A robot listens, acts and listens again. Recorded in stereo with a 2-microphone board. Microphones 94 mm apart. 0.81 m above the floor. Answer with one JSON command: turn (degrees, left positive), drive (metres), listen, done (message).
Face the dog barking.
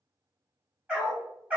{"turn": -15}
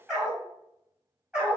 {"turn": -30}
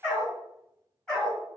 {"done": "Facing the dog barking, 2 to 4 m away."}